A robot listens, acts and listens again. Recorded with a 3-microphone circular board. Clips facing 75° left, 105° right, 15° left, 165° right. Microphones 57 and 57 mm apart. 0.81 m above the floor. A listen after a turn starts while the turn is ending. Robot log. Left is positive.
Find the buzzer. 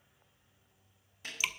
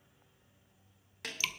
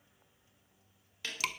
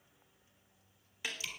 cmd idle
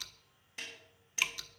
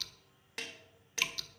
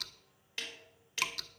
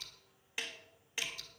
cmd idle
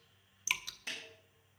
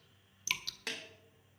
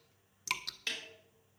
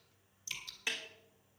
end: I can't make out a buzzer, only dripping and a snare drum.